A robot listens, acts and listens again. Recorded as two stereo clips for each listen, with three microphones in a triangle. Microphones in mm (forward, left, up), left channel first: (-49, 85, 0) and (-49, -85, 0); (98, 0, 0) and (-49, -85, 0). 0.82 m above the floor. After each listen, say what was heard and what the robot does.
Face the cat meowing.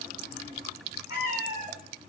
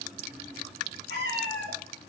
The cat meowing: 160° right. Turn 160° right.
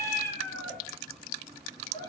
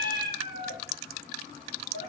The cat meowing is now 30° left. Turn 30° left.
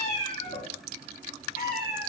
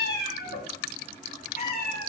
The cat meowing is now 65° left. Turn 65° left.
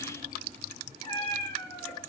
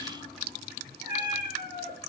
The cat meowing is now 25° left. Turn 25° left.
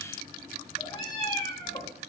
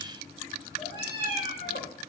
The cat meowing is now 30° left. Turn 30° left.
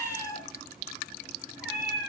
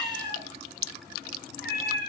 Facing the cat meowing.